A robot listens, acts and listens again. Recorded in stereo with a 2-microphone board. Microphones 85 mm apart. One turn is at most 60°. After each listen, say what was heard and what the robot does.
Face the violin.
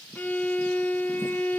The violin: about 20° left or 160° left. Turn 20° left.
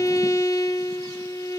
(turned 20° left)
So it is at 140° left. Turn 60° left.
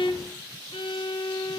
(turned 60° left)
The violin is now 85° left. Turn 60° left.
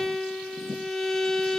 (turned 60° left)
The violin is now 10° left. Turn 10° left.
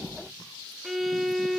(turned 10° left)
Found it: a violin, straight ahead.